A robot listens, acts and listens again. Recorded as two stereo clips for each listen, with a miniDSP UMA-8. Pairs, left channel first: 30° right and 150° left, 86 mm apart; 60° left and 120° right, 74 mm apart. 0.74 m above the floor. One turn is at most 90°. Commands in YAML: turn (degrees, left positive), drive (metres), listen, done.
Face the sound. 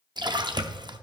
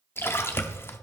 turn: 90
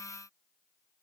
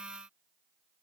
turn: 30
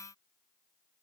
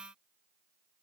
done: "I heard a splash from this way, but can't make it out now."